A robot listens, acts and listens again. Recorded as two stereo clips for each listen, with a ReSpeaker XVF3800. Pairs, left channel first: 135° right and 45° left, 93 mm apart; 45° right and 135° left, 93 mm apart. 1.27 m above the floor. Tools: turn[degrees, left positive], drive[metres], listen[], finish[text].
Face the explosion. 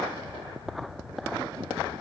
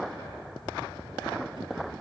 Action: listen[]
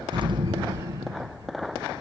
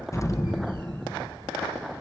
Thought: The explosion: 10° left.
Action: turn[10]
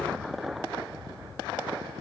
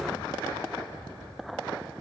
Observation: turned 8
Action: finish[I heard an explosion from this way, but can't make it out now.]